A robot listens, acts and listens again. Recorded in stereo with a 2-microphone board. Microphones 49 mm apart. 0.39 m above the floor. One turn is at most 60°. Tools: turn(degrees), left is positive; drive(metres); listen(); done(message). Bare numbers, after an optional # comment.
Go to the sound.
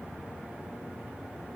listen()
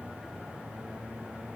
listen()
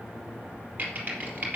# The typing on a keyboard: about 35° right or 145° right.
turn(-35)
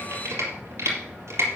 # So it is at 110° right.
turn(-60)
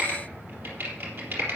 # The typing on a keyboard is now 50° right.
turn(-50)
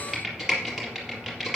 # The typing on a keyboard is now 10° right.
turn(-10)
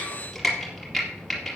drive(1.0)
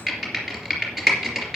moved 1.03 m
drive(1.0)
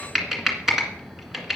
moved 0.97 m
drive(1.0)
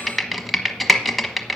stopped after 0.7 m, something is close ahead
done("Arrived at the typing on a keyboard, straight ahead.")